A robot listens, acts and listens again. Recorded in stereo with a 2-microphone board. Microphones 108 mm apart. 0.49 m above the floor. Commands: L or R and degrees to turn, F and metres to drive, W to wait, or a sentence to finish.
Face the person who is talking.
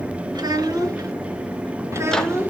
R20
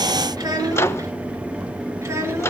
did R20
R25
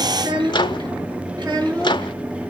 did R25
R140
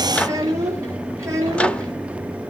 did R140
R30
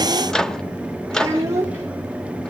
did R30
R25
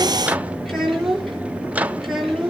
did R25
Facing the child speaking, over 4 m away.